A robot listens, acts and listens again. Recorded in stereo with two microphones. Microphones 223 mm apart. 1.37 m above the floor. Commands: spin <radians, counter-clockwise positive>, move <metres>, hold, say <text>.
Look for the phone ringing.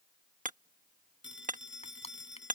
spin 1.13
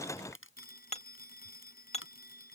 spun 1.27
spin 0.79
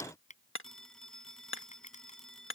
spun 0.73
say Facing the phone ringing.